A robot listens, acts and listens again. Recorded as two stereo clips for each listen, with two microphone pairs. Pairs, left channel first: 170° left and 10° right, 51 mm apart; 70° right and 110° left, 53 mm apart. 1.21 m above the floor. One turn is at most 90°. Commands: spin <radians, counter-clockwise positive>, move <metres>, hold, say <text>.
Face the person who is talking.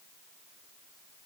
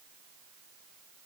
hold
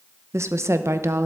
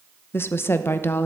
spin -0.52
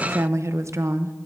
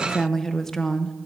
spin 0.17
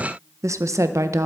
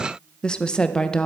say Found it: a woman speaking, straight ahead, under 1 m away.